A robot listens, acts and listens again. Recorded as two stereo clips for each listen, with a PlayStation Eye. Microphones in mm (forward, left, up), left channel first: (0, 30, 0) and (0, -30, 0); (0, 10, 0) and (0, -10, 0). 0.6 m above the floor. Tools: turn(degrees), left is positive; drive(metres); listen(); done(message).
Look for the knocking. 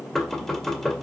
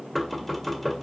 turn(degrees=30)
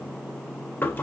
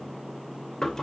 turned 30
turn(degrees=140)
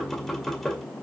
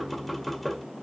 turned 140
done("Found it: knocking, straight ahead, 1 to 2 m away.")